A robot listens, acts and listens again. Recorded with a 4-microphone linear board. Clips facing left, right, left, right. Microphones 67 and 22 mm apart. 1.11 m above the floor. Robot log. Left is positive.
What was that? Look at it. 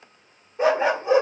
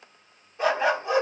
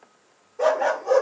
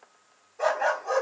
note: The dog barking: about 20° left or 160° left.
cmd yaw +20
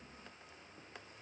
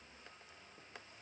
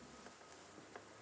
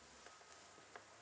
cmd idle
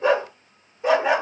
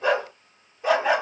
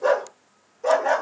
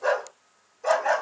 end: Facing the dog barking.